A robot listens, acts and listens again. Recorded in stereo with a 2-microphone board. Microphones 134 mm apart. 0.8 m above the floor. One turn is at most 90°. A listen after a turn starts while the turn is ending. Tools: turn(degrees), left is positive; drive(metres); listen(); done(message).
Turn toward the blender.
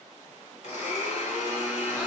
turn(degrees=60)
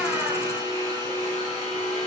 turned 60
turn(degrees=55)
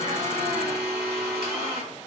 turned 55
done("Facing the blender.")